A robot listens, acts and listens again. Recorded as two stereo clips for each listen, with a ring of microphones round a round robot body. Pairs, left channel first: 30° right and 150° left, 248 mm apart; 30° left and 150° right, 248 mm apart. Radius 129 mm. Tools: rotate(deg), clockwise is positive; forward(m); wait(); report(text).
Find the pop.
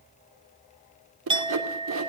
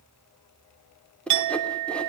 wait()
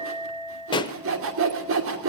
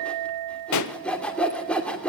rotate(-40)
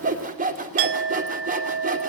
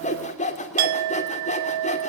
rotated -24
rotate(-15)
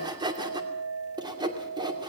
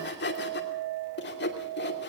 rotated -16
report("I heard a pop from this way, but can't make it out now.")